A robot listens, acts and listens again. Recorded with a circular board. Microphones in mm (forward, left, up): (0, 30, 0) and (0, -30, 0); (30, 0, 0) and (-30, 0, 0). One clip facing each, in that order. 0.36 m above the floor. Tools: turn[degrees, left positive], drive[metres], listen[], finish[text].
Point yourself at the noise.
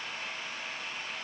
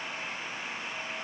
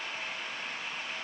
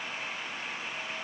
Action: listen[]
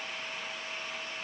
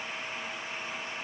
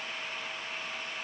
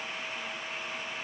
Action: listen[]
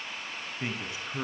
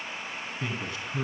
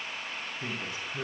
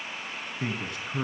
Thought: The man speaking: 160° left.
Action: turn[160]
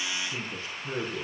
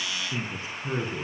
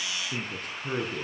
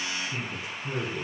Thought: The man speaking is now 20° right.
Action: turn[-20]
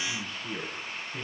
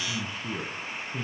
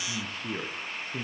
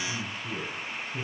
Action: finish[Facing the man speaking.]